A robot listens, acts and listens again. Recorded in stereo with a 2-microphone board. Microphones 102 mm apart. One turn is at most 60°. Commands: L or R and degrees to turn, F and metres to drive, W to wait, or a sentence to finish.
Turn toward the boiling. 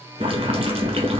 R60
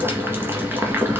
R25
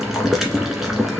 Found it: boiling, straight ahead, 1 to 2 m away.